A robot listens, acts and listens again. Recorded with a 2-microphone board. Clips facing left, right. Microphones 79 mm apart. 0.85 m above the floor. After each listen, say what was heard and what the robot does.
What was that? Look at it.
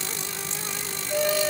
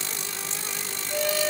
The singing: about 15° left or 165° left. Turn 15° left.
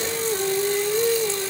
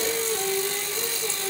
The singing: about 25° left or 155° left. Turn 25° left.
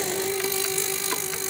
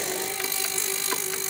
So it is at 130° left. Turn 130° left.
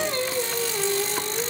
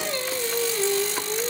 The singing is now 50° left. Turn 50° left.
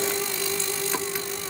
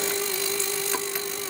The singing is now 15° left. Turn 15° left.
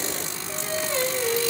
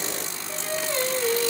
Facing the singing, 2 to 4 m away.